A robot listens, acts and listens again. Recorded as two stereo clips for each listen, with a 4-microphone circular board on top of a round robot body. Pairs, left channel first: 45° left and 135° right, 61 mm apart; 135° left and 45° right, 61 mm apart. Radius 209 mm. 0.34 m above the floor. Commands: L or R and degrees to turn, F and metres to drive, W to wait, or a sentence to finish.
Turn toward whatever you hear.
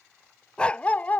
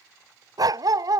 R20
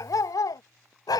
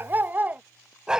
L35
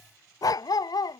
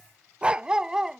L40
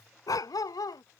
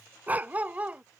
L25
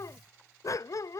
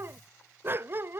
L10
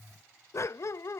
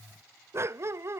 Facing the dog barking.